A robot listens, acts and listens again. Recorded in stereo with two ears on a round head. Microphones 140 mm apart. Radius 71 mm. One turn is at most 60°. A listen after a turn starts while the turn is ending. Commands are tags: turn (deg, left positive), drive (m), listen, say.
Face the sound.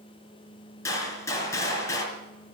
<turn deg="20"/>
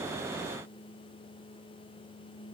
<listen/>
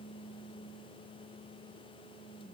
<say>I heard a gunshot, but can't make it out now. It was about straight ahead or 140° left.</say>